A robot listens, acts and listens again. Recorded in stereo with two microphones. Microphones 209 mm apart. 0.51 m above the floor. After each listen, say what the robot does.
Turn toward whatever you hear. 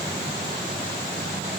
Keep listening.
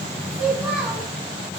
Turn 30° right.
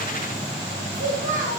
Turn 105° right.
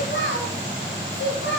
Turn 80° left.
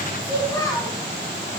Turn 10° left.
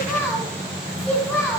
Found it: a child speaking, straight ahead, 1 to 2 m away.